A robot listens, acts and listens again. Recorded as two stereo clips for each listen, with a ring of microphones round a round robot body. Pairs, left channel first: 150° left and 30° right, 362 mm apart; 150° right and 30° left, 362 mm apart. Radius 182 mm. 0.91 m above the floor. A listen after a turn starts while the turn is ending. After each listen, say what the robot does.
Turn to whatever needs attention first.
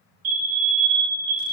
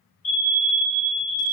Turn 80° right.
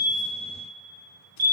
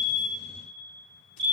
Turn 10° right.
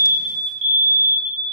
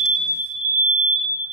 Found it: a fire alarm, straight ahead.